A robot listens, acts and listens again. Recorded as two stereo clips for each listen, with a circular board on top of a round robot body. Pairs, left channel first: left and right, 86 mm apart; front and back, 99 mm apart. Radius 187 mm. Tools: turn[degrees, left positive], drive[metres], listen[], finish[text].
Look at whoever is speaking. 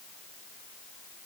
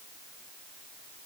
Action: listen[]
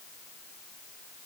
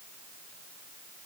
Action: listen[]
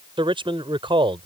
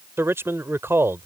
Thought: The man speaking: 110° right.
Action: turn[-110]
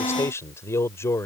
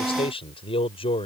Thought: The man speaking is now 30° left.
Action: turn[30]
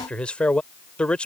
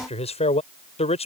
Thought: The man speaking is now 10° left.
Action: turn[10]
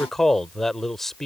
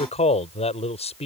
Action: finish[Facing the man speaking.]